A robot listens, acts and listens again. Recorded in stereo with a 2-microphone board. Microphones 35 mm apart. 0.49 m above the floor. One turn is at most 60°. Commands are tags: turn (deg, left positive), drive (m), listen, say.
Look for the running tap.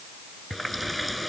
<turn deg="-30"/>
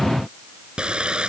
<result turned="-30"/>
<turn deg="-60"/>
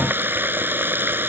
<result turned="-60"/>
<turn deg="-60"/>
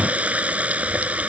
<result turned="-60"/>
<turn deg="-40"/>
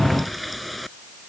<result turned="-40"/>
<say>Found it: a running tap, straight ahead.</say>